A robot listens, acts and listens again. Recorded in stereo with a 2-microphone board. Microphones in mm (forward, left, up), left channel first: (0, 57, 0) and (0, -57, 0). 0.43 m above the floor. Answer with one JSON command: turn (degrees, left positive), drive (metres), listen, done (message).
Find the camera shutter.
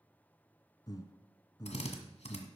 {"listen": true}
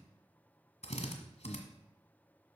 {"listen": true}
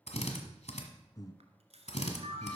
{"turn": -70}
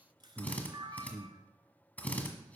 {"turn": -40}
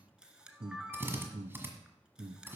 {"turn": -10}
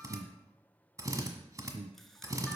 {"listen": true}
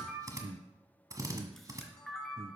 {"done": "Facing the camera shutter, 1 to 2 m away."}